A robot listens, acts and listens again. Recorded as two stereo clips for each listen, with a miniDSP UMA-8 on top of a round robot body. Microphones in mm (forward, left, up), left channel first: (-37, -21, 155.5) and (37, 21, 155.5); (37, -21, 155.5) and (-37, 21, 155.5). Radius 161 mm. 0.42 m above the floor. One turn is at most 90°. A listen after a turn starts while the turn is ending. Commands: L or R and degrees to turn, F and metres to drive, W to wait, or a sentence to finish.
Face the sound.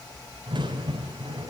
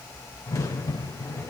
L15
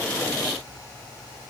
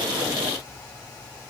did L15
Facing where the crack came from. I can't hear it now.